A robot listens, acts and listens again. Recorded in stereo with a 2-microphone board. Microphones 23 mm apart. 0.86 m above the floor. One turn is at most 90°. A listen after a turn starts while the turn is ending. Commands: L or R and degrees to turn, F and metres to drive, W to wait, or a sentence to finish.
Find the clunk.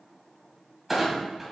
R30
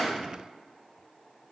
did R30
W
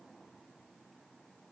I heard a clunk, but can't make it out now. It was about 20° left or 140° right.